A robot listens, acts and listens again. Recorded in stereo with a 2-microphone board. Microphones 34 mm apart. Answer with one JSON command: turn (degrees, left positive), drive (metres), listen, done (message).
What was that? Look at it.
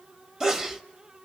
{"turn": -20}
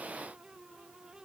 {"listen": true}
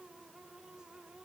{"done": "I heard a sneeze, but can't make it out now. It was about straight ahead or 140° right."}